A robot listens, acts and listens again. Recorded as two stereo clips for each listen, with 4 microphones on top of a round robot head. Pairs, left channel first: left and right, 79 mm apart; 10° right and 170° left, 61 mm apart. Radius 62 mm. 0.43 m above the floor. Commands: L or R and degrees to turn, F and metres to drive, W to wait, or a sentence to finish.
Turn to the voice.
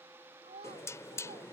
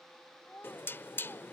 R85
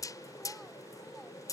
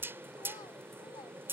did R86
W
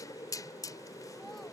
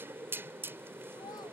W
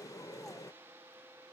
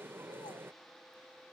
Facing where the child speaking came from. I can't hear it now.